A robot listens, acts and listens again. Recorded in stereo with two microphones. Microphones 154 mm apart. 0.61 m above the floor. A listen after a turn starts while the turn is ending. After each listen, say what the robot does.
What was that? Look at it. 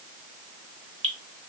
Turn 50° right.
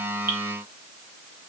Keep listening.
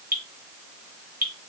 Turn 80° right.
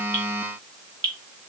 Turn 35° right.
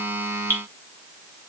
Turn 10° left.
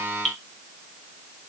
Facing the dripping, under 1 m away.